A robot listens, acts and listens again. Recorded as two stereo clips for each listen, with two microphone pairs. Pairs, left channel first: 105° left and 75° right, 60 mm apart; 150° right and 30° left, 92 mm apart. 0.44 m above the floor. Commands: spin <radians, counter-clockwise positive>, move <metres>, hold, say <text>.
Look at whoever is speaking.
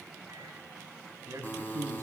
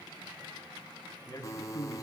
spin -1.83
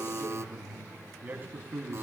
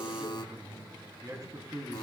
spin -0.35
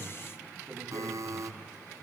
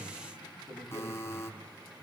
hold
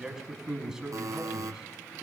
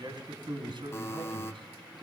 say Found it: a man speaking, straight ahead.